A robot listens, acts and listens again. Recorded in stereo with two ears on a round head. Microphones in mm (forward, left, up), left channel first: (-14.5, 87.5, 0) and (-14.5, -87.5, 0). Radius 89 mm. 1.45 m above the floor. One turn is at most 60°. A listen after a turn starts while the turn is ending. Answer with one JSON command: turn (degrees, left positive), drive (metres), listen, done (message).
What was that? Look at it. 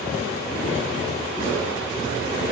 {"listen": true}
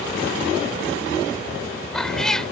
{"turn": 30}
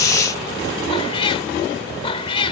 {"turn": 60}
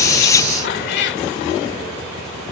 {"turn": 60}
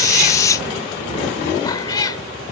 {"turn": 25}
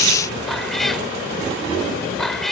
{"done": "Found it: a cat meowing, straight ahead."}